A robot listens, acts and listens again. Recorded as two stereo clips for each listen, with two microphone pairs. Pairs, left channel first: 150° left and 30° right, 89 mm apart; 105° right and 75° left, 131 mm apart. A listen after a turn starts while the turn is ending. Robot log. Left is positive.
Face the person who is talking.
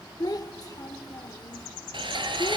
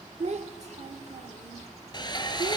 note: The child speaking: 105° left.
cmd yaw +105
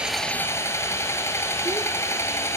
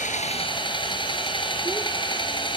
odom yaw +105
cmd idle
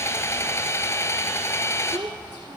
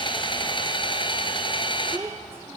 end: Facing the child speaking, under 1 m away.